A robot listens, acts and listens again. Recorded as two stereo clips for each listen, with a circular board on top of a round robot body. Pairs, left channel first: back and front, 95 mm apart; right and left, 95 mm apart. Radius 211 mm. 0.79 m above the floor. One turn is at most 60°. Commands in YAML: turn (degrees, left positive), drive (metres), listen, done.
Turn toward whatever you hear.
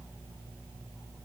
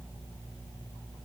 listen: true
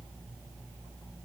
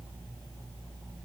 listen: true
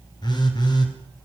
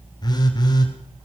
turn: -60
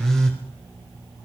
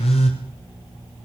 turn: -60
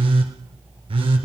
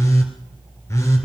turn: -30
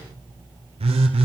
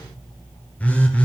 turn: -15
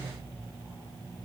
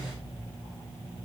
listen: true
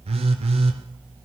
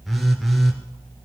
done: "Facing the phone buzzing, 2 to 4 m away."